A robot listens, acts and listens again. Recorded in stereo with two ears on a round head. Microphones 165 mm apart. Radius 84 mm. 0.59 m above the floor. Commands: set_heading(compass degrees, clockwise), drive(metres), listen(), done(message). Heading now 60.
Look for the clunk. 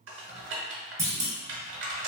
set_heading(80)
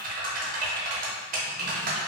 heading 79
listen()
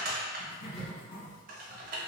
done("I heard a clunk, but can't make it out now. It was about straight ahead or 145° right.")